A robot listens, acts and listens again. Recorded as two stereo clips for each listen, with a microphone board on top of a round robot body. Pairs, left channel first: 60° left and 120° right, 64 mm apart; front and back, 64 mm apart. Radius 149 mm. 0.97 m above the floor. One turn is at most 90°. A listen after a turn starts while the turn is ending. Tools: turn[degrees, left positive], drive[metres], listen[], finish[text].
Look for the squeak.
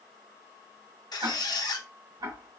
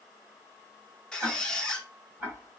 Thought: The squeak: 80° left.
Action: turn[80]
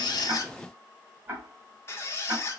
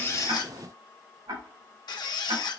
Thought: The squeak is now 10° left.
Action: turn[10]
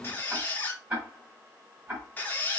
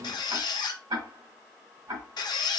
Action: finish[Facing the squeak, under 1 m away.]